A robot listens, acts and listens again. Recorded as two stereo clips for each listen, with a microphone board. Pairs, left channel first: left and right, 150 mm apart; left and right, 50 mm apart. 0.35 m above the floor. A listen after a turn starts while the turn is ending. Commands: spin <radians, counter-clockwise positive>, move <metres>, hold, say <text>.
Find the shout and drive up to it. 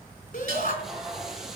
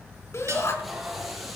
spin 1.22
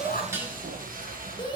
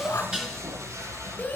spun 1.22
spin 0.61
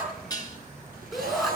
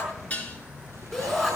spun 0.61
move 1.0
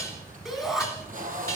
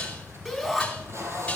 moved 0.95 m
move 1.0
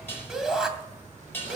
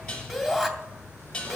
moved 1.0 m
move 1.0
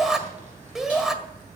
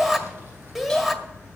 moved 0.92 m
move 1.0
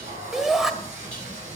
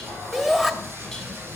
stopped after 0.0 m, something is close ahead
say I am next to the shout.